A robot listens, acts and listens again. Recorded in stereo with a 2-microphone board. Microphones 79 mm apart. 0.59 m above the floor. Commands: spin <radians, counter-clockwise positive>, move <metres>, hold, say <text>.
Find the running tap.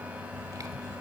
hold
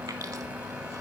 hold
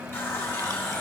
spin 0.52
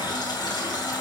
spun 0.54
spin 2.09
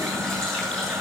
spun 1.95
say Found it: a running tap, straight ahead, 2 to 4 m away.